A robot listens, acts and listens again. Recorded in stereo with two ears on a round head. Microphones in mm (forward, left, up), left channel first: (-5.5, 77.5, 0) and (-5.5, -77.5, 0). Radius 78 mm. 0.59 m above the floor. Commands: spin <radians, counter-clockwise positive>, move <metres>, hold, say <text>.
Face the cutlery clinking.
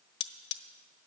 spin 1.22
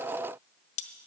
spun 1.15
spin 0.70
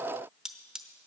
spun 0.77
say Facing the cutlery clinking, under 1 m away.